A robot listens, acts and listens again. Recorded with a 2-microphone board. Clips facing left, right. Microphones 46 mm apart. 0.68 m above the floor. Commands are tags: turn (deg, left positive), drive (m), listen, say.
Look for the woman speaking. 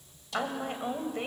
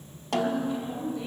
<turn deg="60"/>
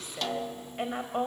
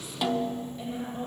<turn deg="55"/>
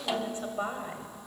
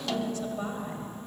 <turn deg="25"/>
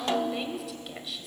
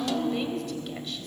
<say>Facing the woman speaking.</say>